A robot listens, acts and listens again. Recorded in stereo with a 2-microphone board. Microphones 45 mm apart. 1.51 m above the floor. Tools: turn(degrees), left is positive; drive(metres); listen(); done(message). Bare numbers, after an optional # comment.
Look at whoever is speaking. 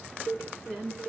turn(30)
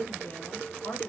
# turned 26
# So it is at 125° left.
turn(125)
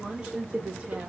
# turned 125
# The woman speaking is now 25° right.
turn(-25)
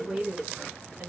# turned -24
# The woman speaking is now 20° right.
turn(-20)
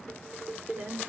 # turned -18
# The woman speaking is now 25° right.
turn(-25)
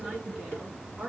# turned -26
done("Found it: a woman speaking, straight ahead.")